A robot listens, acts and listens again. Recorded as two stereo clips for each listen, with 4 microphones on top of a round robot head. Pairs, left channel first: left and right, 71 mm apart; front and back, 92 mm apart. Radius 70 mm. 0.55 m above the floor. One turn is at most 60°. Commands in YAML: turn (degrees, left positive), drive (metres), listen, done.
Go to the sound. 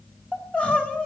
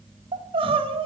turn: 60
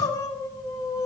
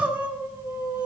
turn: 60
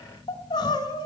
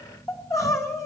turn: 55
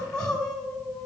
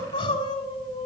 turn: 10
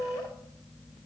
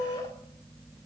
drive: 1.0
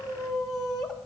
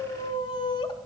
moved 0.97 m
drive: 1.0
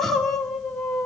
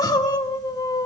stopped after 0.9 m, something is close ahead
done: "I am next to the crying."